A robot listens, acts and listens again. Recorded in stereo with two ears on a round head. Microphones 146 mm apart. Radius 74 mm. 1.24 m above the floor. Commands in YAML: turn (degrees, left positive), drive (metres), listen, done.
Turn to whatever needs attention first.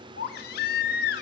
turn: 65
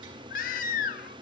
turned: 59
turn: 50
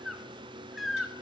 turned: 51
done: "Facing the baby crying."